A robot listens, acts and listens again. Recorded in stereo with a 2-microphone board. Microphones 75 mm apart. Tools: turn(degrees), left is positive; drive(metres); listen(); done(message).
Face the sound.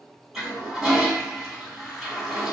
turn(degrees=-30)
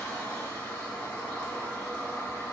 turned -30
turn(degrees=20)
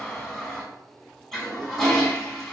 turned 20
done("Facing the toilet flushing, 1 to 2 m away.")